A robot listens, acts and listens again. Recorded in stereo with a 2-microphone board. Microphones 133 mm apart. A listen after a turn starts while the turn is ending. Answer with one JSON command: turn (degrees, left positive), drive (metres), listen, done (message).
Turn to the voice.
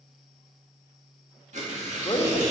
{"turn": 30}
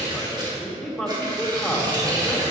{"done": "Found it: a man speaking, straight ahead, 2 to 4 m away."}